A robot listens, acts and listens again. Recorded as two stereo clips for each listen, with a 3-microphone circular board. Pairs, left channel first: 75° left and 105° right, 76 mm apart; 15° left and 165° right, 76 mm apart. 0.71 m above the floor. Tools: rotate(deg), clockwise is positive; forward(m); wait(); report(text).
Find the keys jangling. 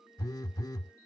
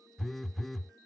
wait()
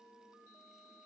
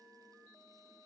wait()
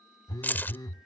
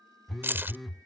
rotate(-135)
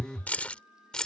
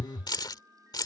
report("Facing the keys jangling.")